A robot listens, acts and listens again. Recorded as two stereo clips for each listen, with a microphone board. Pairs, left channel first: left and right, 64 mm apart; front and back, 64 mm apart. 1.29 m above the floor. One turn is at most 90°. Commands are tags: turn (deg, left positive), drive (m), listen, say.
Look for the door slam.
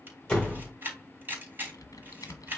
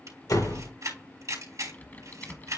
<turn deg="10"/>
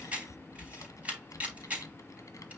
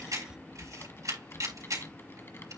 <say>Facing where the door slam came from. I can't hear it now.</say>